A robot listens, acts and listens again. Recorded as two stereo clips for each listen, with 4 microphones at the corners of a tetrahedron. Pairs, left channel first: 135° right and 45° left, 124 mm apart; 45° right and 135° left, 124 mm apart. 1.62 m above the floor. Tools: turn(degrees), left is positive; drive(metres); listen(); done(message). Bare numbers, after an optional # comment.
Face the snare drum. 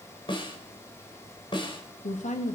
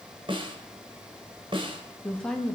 # The snare drum: straight behind.
turn(180)
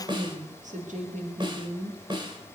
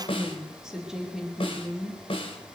done("Facing the snare drum, 2 to 4 m away.")